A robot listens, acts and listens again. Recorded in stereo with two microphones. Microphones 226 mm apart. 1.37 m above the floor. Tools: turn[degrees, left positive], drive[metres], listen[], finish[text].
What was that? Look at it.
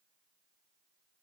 Action: listen[]
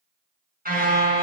Thought: The car horn: about 40° right or 140° right.
Action: turn[-40]
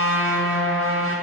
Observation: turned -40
Thought: So it is at 95° right.
Action: turn[-95]
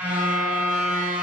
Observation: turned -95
Thought: The car horn is now 10° right.
Action: turn[-10]
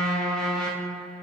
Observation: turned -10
Action: finish[Found it: a car horn, straight ahead, over 4 m away.]